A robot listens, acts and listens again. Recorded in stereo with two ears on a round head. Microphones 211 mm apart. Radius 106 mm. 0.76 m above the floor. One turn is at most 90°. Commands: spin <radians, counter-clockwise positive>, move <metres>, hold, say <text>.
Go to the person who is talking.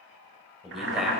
spin 0.52
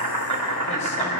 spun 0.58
hold
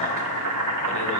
hold
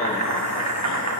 say I heard a man speaking, but can't make it out now. It was about 35° right or 150° left. I did not reach it.